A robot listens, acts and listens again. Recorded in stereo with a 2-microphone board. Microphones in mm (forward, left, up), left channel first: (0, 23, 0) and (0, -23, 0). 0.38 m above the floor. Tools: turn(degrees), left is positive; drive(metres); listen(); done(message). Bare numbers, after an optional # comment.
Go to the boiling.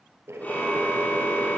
turn(-90)
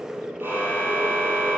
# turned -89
# So it is at 15° right.
turn(-15)
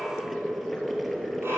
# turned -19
drive(1.0)
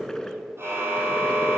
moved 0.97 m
# The boiling is now 15° left.
turn(15)
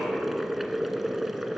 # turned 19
drive(1.0)
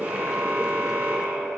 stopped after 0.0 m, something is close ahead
# The boiling is now 10° right.
turn(-10)
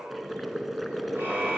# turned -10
done("I am next to the boiling.")